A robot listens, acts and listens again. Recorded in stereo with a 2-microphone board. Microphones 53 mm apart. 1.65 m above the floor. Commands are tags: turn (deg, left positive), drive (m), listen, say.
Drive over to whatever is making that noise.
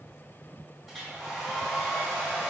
<turn deg="-30"/>
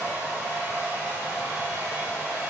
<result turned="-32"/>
<turn deg="-140"/>
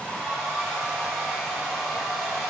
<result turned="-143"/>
<drive m="1.0"/>
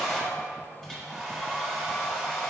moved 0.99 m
<drive m="1.0"/>
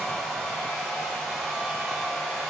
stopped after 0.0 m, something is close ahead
<say>I am next to the hair dryer.</say>